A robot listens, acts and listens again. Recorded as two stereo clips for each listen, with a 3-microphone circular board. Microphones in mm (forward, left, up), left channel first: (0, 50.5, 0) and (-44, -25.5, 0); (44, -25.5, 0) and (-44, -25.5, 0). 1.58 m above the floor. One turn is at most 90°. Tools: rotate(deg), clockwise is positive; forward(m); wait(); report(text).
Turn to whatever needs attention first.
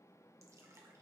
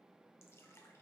wait()
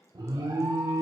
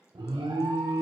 rotate(90)
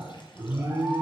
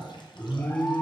rotate(55)
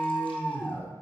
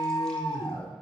rotate(10)
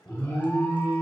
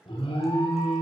report("Facing the alarm, 1 to 2 m away.")